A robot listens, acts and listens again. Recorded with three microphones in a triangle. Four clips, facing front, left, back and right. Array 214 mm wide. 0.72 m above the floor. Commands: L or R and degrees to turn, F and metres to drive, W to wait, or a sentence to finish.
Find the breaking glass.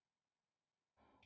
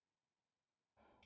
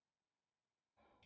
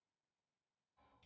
W
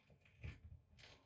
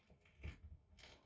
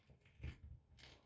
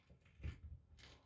W
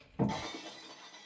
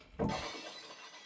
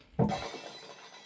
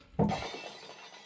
R135
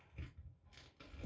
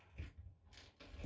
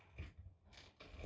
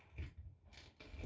Facing where the breaking glass came from. I can't hear it now.